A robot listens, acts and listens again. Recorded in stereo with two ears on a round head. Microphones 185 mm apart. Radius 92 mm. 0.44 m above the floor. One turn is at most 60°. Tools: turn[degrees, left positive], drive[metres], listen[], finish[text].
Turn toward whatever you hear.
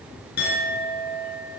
Thought: The clink: about 55° left or 125° left.
Action: turn[55]
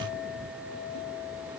Thought: So it is at 70° left.
Action: turn[60]
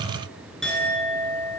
Action: finish[Found it: a clink, straight ahead, 2 to 4 m away.]